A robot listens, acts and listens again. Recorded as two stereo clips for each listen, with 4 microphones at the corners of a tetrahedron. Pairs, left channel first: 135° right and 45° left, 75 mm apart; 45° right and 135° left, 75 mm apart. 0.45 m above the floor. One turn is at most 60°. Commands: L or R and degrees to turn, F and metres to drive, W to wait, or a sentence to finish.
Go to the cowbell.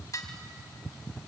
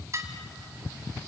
W
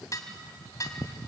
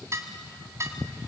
W
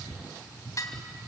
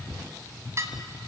I can't make out a cowbell to turn to.